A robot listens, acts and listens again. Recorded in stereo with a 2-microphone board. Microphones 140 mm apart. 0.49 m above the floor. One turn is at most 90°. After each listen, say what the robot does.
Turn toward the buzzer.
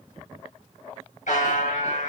Turn 70° left.
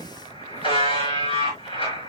Turn 40° left.
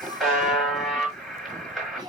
Found it: a buzzer, straight ahead, over 4 m away.